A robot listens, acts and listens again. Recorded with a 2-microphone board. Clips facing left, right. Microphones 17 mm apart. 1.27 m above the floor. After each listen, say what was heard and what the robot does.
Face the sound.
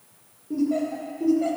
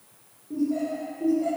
The laughter: about 35° left or 145° left. Turn 35° left.
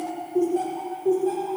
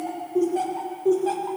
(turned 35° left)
So it is at 40° right. Turn 40° right.
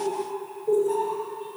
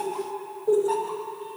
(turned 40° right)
The laughter is now 40° right. Turn 40° right.
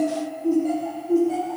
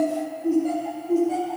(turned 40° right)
Facing the laughter.